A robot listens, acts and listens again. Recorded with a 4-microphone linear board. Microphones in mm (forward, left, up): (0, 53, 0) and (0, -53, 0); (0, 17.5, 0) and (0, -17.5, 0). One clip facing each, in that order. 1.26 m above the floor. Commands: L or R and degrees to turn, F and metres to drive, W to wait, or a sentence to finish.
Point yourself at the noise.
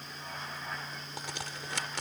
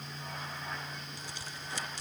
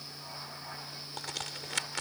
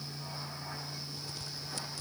L90
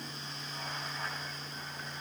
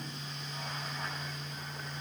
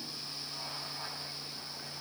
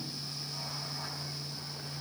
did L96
Facing where the crack came from. I can't hear it now.